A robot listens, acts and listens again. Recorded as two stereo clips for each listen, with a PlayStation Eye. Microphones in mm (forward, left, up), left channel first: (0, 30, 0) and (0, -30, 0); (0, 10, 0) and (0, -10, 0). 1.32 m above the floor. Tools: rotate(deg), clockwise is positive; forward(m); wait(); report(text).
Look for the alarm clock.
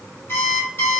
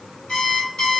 rotate(-35)
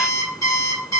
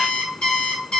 rotate(-105)
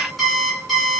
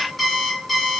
report("Facing the alarm clock, 1 to 2 m away.")